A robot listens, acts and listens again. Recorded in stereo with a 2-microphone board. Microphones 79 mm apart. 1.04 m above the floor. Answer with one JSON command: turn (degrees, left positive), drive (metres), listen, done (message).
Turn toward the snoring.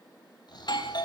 {"turn": 60}
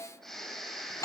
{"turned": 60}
{"done": "Facing the snoring, over 4 m away."}